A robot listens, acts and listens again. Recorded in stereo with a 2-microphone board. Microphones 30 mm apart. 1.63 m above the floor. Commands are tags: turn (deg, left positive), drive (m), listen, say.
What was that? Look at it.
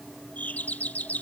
<turn deg="70"/>
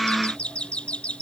<turn deg="40"/>
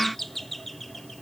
<say>Found it: a doorbell, straight ahead.</say>